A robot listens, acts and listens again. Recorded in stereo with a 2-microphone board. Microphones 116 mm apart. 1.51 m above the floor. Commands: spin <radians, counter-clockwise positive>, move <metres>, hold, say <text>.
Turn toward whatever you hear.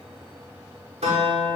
spin -1.22
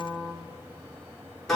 say Found it: a guitar, straight ahead, over 4 m away.